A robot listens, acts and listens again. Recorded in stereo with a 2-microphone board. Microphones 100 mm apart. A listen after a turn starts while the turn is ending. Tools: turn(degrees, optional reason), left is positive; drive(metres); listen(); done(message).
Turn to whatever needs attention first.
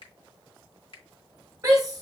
turn(degrees=-35, reason="The shout: about 35° right or 145° right.")
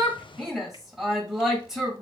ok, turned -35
done("Facing the shout.")